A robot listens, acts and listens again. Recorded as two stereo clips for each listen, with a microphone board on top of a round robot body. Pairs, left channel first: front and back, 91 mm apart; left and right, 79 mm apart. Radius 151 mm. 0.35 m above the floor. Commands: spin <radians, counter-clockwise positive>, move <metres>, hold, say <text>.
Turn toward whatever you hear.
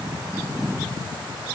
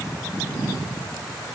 hold
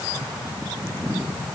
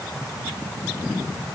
hold
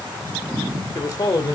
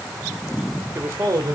spin -0.79
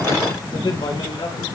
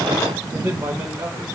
spin -0.44
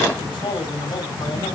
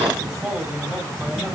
spin -0.17
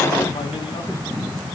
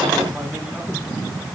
hold
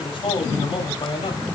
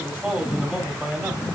say Found it: a man speaking, straight ahead, 2 to 4 m away.